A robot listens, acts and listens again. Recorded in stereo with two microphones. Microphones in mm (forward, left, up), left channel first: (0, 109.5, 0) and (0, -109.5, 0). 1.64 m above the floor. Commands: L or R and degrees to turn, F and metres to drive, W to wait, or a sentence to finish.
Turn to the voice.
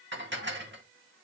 W
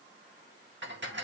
W
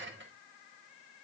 I can't make out anyone speaking, only dishes clattering.